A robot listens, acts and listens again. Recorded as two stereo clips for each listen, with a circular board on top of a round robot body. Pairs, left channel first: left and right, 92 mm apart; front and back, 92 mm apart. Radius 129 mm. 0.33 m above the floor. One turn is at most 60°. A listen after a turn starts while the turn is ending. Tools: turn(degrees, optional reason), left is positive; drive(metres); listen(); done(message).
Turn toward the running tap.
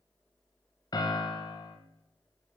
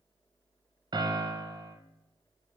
listen()
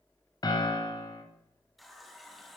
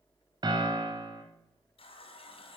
done("Found it: a running tap, straight ahead.")